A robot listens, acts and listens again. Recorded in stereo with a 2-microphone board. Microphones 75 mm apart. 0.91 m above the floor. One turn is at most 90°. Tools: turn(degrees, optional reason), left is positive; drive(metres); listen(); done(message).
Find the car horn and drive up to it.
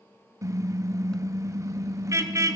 turn(degrees=-45, reason="The car horn: about 45° right or 135° right.")
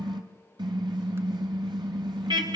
turn(degrees=-90, reason="So it is at 90° right.")
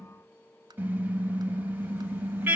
turn(degrees=-25, reason="The car horn is now 25° right.")
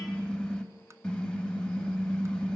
turn(degrees=15, reason="The car horn is now 15° left.")
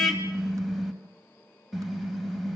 drive(metres=1.0)
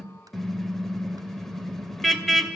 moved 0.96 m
drive(metres=1.0)
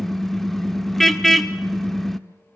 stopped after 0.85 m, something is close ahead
done("I am next to the car horn.")